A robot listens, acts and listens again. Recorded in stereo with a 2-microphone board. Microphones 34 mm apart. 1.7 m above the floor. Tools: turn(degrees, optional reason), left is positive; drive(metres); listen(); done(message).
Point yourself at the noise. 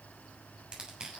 turn(degrees=-30, reason="The crushing: about 30° right or 150° right.")
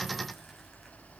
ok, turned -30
listen()
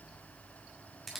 done("Facing the crushing.")